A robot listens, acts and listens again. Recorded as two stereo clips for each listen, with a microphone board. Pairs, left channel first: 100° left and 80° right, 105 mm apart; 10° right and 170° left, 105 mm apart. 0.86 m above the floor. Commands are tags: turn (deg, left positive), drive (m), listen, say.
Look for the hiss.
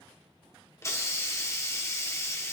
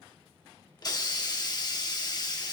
<turn deg="35"/>
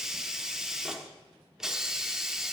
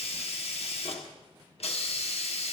<say>Facing the hiss, 1 to 2 m away.</say>